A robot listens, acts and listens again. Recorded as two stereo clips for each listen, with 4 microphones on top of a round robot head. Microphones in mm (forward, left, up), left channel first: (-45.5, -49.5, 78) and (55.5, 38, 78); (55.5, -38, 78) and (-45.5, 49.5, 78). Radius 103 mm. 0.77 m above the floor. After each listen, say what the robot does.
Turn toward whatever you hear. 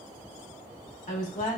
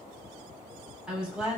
Turn 135° right.
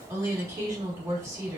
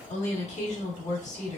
Turn 25° right.
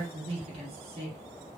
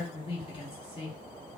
Found it: a woman speaking, straight ahead, 1 to 2 m away.